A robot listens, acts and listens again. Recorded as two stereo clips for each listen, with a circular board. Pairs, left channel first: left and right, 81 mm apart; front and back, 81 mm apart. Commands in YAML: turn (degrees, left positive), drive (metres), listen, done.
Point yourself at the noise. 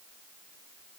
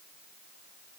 listen: true
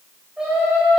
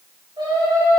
turn: -175
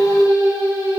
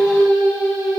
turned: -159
turn: -35
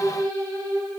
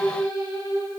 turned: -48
turn: 10
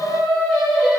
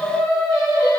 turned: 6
done: "Found it: singing, straight ahead, over 4 m away."